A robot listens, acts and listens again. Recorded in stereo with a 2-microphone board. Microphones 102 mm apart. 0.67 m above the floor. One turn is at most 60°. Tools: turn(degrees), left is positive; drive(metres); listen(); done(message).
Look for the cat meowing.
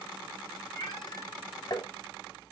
turn(degrees=55)
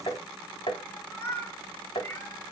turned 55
turn(degrees=30)
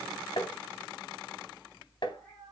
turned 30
listen()
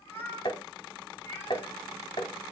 turn(degrees=25)
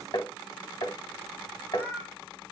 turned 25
turn(degrees=20)
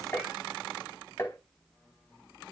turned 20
listen()
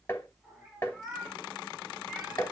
done("Facing the cat meowing, over 4 m away.")